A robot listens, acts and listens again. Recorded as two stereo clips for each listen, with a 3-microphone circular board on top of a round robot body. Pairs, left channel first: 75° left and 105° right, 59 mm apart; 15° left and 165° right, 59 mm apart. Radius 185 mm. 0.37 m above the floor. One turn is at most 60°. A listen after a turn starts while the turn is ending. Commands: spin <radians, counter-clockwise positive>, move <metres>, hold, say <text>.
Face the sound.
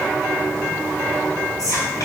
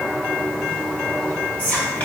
spin 1.05
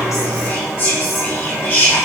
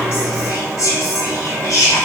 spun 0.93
spin 0.44
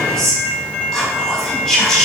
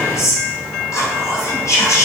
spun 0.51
spin -0.17
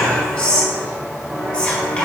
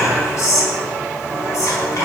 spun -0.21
say Found it: whispering, straight ahead, 1 to 2 m away.